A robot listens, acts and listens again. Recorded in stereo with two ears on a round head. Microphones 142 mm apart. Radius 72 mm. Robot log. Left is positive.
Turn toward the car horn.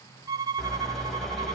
cmd yaw +30
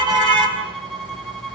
note: So it is at 30° right.
cmd yaw -30
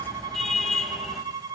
end: Facing the car horn, over 4 m away.